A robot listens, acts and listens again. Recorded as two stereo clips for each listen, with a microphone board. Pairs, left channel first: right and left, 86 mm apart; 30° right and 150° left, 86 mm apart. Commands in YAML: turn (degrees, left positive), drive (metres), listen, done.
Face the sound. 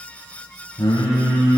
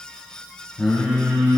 turn: -120
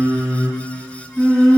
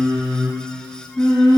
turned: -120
done: "Found it: singing, straight ahead."